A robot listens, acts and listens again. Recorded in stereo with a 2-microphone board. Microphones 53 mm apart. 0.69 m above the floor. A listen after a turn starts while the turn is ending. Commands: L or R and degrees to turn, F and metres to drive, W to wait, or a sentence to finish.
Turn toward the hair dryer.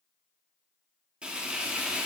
W
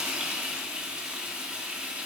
W
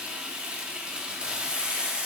I can't make out a hair dryer, only frying.